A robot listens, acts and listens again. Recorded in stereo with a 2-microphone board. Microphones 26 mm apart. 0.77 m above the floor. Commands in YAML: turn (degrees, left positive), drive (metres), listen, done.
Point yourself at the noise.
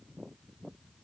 listen: true
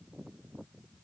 listen: true
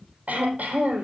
turn: -70
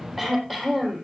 done: "Found it: throat clearing, straight ahead, over 4 m away."